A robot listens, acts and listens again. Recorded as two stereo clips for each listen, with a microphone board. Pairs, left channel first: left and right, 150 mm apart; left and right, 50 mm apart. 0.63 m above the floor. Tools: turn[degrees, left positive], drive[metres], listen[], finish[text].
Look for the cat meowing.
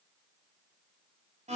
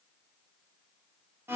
Action: listen[]
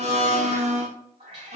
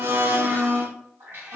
Thought: The cat meowing: about 45° right or 135° right.
Action: turn[-45]
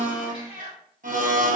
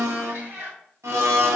Thought: So it is at 95° right.
Action: turn[-95]
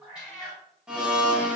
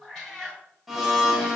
Action: finish[Facing the cat meowing, 2 to 4 m away.]